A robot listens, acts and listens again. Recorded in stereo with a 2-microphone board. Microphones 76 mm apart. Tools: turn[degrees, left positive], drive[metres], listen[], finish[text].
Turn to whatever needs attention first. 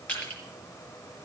Action: listen[]
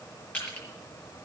Action: listen[]
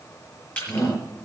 Thought: The shout: about 50° left or 130° left.
Action: turn[50]
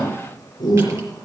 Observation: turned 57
Thought: So it is at 70° left.
Action: turn[70]
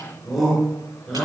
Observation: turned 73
Action: finish[Found it: a shout, straight ahead, over 4 m away.]